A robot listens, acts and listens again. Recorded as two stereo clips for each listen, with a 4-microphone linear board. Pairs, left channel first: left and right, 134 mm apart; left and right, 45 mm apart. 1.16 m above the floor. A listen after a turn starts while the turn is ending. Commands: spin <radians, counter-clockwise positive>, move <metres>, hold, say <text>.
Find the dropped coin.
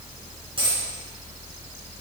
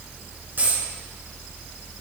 spin -0.70
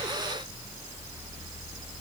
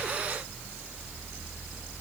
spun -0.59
hold
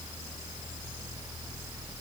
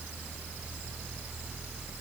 say I heard a dropped coin, but can't make it out now. It was about 5° right or 105° right.